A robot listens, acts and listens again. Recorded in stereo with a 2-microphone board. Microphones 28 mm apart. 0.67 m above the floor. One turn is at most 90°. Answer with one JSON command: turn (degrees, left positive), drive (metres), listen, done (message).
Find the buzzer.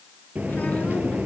{"turn": -75}
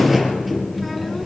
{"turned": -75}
{"done": "Facing the buzzer."}